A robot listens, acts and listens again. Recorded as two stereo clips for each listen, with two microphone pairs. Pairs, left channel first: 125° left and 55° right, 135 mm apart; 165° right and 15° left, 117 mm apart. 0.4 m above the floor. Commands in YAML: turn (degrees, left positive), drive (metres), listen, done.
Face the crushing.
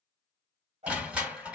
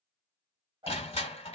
turn: -135
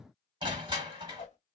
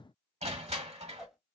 done: "Facing the crushing, 1 to 2 m away."